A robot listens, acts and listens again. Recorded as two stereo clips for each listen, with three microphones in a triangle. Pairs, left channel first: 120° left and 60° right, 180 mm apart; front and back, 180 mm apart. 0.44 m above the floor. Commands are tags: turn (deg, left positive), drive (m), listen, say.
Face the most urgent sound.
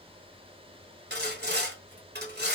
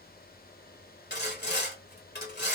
<listen/>
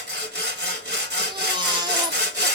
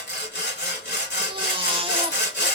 <turn deg="-120"/>
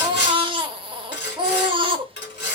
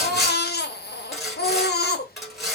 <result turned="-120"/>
<say>Found it: a baby crying, straight ahead, under 1 m away.</say>